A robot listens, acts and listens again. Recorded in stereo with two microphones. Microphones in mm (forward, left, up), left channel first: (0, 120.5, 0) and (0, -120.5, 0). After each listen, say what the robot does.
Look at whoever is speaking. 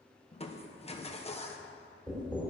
Keep listening.
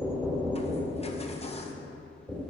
Keep listening.
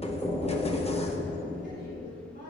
Turn 50° right.
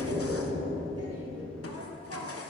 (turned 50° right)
Turn 85° right.
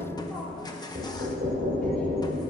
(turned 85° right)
Keep listening.
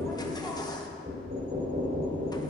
Keep listening.
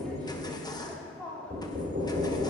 Facing the woman speaking.